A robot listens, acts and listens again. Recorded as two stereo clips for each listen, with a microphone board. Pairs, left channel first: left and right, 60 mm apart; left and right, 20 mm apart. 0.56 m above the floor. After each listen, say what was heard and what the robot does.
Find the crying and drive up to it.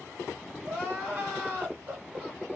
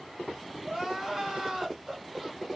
The crying: about 25° right or 155° right. Turn 25° right.
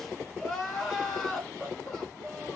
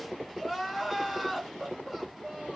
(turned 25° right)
Drive 1.0 m forward.
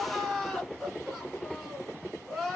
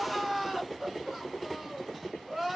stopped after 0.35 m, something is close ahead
Blocked. The crying is further on, straight ahead.